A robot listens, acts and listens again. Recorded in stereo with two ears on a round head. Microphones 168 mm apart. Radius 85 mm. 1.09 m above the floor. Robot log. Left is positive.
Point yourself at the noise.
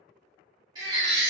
note: The baby crying: about 25° right or 155° right.
cmd yaw -25
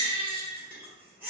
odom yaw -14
note: So it is at 10° right.
cmd yaw -10
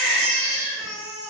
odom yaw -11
end: Facing the baby crying.